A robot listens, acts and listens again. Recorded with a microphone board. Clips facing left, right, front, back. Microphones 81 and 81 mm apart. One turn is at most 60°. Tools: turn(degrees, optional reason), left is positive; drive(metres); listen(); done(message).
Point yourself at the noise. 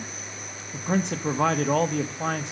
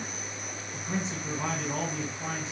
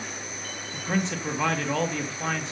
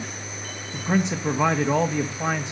turn(degrees=60, reason="The man speaking: 110° left.")
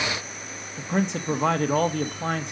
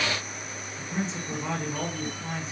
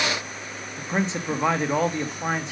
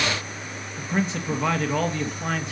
turn(degrees=60, reason="The man speaking is now 70° left.")
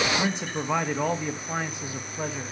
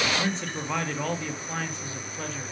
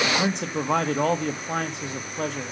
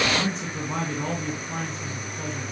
turn(degrees=15, reason="The man speaking is now 15° left.")
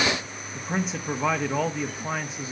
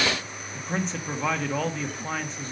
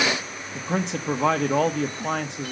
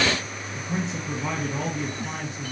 turn(degrees=10, reason="The man speaking is now 10° left.")
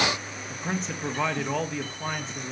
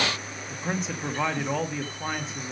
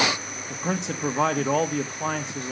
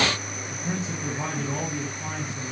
done("Facing the man speaking, 1 to 2 m away.")